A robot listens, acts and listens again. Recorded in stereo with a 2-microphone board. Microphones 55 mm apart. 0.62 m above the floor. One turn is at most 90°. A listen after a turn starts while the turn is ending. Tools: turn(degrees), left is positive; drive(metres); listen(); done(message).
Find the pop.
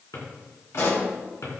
turn(degrees=55)
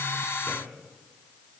listen()
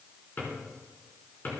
done("I heard a pop, but can't make it out now. It was about straight ahead or 70° left.")